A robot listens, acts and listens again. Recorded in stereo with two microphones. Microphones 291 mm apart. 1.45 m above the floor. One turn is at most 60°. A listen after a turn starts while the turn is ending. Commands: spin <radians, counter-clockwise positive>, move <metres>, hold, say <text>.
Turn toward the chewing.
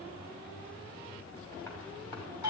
hold
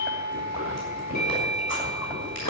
spin 1.05
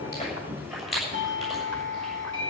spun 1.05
say Facing the chewing, over 4 m away.